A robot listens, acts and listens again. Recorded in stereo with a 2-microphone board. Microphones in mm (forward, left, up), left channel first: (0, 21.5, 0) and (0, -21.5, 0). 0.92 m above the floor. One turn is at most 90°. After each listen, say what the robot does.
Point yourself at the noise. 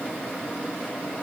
Keep listening.
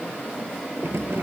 Turn 90° right.
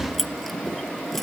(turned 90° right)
Found it: keys jangling, straight ahead.